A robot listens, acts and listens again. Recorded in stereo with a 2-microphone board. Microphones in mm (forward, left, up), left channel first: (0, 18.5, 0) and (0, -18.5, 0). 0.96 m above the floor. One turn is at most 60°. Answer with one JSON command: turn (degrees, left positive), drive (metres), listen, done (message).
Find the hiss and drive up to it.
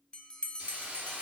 {"turn": -30}
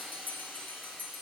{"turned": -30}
{"drive": 1.0}
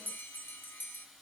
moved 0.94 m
{"drive": 1.0}
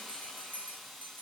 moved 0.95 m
{"drive": 1.0}
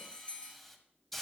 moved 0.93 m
{"drive": 1.0}
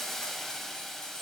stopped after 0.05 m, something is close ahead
{"turn": 10}
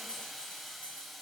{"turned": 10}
{"done": "I am next to the hiss."}